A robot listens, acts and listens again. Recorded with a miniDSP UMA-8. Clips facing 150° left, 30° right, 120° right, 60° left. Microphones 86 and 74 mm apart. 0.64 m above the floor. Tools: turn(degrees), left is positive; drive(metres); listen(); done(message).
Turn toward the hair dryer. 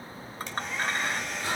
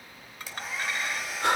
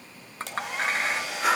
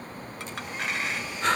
turn(degrees=-115)
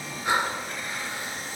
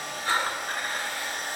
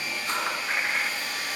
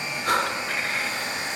done("Found it: a hair dryer, straight ahead.")